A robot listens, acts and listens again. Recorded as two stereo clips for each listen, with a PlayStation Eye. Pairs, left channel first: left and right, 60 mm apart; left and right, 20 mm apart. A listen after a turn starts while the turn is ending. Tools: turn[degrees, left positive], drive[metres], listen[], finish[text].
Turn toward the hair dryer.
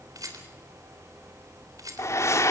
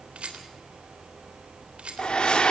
Thought: The hair dryer: about 55° left or 125° left.
Action: turn[55]
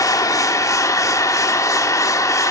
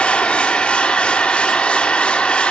Thought: So it is at 70° left.
Action: turn[70]
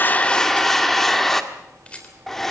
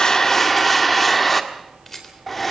Action: finish[Facing the hair dryer, 1 to 2 m away.]